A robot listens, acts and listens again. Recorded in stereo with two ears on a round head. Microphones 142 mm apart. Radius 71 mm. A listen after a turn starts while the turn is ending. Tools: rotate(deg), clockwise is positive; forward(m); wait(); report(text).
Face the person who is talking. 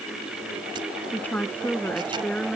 rotate(-30)
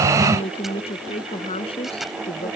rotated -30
rotate(-145)
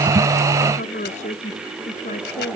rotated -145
rotate(-50)
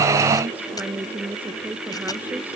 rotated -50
rotate(10)
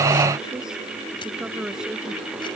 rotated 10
report("Facing the woman speaking.")